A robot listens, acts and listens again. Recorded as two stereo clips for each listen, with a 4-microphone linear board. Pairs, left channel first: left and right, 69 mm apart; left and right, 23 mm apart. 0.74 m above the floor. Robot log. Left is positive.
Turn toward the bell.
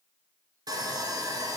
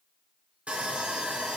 cmd idle
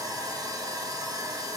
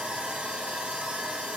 cmd idle
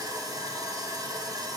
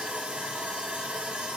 end: I can't make out a bell to turn to.